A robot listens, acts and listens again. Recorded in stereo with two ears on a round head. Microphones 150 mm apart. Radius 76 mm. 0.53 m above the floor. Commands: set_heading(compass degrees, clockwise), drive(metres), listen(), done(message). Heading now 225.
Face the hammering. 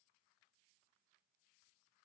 listen()
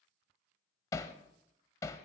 set_heading(205)
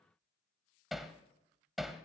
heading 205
done("Found it: hammering, straight ahead.")